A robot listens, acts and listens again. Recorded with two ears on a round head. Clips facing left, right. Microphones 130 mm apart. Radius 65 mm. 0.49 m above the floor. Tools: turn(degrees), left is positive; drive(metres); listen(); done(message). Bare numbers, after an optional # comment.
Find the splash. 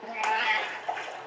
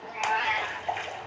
turn(-30)
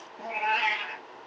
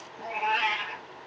listen()
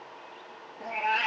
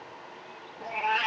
done("I heard a splash, but can't make it out now. It was about 20° left or 140° right.")